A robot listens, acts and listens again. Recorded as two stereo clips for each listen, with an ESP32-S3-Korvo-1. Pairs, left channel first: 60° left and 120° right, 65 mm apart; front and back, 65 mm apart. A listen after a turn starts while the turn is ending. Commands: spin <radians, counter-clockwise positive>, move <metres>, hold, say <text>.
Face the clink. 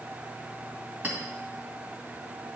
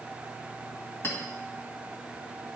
spin -0.87
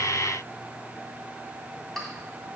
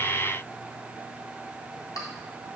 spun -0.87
spin -0.44
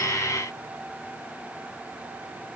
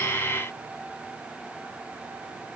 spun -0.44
hold
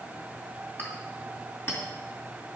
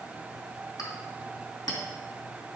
say Facing the clink.